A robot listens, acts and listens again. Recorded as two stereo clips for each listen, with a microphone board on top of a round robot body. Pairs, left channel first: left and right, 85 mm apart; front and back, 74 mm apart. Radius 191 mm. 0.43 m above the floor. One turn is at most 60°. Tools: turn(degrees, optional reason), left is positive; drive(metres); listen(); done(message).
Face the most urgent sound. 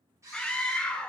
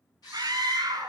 turn(degrees=60, reason="The scream: 170° left.")
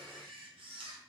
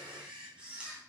turn(degrees=60, reason="Nothing new. It was at 110° left.")
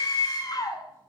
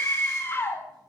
turn(degrees=55, reason="The scream is now 55° left.")
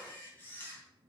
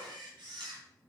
listen()
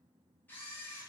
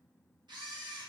listen()
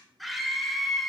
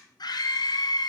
done("Facing the scream.")